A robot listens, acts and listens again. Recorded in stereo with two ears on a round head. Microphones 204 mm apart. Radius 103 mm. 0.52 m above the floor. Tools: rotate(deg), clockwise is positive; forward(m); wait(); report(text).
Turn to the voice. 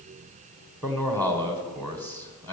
rotate(-30)
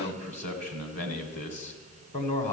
rotate(-140)
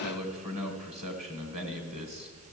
rotate(30)
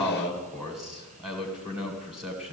report("Facing the man speaking.")